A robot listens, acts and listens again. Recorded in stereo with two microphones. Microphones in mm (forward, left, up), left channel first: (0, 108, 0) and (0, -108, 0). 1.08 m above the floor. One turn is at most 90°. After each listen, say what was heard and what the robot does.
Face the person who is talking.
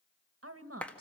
Turn 90° right.
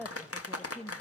Found it: a woman speaking, straight ahead.